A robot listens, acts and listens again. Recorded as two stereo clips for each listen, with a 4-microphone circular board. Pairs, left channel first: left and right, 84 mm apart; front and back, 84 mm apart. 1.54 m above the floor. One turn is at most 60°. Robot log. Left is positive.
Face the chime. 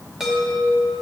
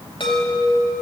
end: Facing the chime.